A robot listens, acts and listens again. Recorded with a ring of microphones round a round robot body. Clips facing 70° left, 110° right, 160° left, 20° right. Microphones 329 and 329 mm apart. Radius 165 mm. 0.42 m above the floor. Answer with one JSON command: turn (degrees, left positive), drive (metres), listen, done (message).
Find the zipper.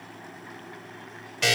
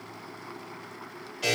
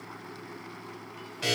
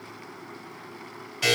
{"listen": true}
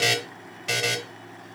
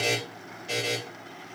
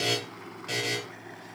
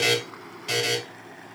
{"listen": true}
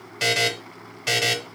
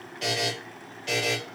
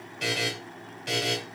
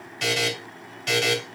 {"done": "I can't make out a zipper to turn to."}